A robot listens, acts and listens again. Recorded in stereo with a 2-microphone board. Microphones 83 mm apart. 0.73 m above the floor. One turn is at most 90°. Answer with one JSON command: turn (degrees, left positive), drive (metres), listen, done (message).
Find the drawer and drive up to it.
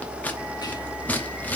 {"listen": true}
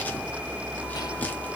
{"listen": true}
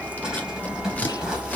{"turn": -30}
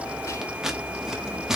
{"listen": true}
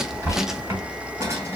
{"turn": -90}
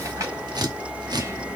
{"turn": -50}
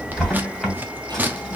{"drive": 1.0}
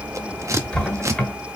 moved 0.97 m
{"turn": 10}
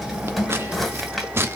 {"drive": 1.0}
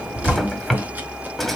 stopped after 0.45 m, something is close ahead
{"done": "Arrived at the drawer, straight ahead."}